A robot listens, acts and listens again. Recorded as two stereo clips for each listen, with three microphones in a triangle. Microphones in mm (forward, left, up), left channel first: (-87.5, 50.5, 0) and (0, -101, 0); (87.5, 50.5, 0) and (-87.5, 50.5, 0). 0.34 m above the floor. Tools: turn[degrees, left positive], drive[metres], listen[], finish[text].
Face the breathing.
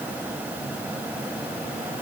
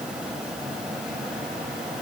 Action: listen[]
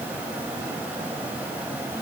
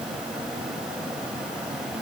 Action: listen[]
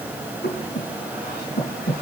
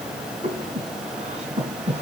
Thought: The breathing: 130° left.
Action: turn[130]
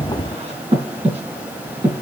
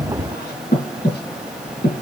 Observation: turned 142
Thought: The breathing is now 10° right.
Action: turn[-10]
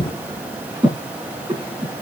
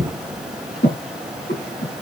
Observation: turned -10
Action: finish[Found it: breathing, straight ahead.]